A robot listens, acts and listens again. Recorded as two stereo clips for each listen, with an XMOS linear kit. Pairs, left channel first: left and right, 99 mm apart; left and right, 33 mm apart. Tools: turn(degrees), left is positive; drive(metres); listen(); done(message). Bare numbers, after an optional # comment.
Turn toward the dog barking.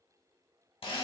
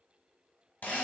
listen()
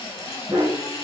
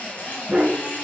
# The dog barking: about 65° right or 115° right.
turn(-65)
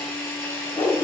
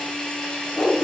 # So it is at 45° left.
turn(45)
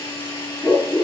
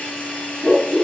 # The dog barking is now 40° left.
turn(40)
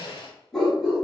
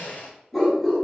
done("Found it: a dog barking, straight ahead, 2 to 4 m away.")